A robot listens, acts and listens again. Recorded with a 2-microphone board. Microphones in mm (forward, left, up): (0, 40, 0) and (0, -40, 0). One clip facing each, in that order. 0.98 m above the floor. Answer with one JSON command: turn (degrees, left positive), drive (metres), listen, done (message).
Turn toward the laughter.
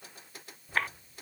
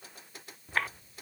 {"turn": -90}
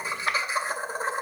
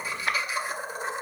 {"turn": 40}
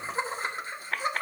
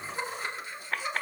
{"turn": 45}
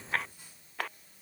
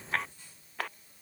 {"listen": true}
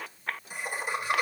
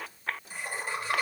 {"turn": 15}
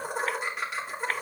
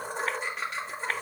{"done": "Found it: laughter, straight ahead, 1 to 2 m away."}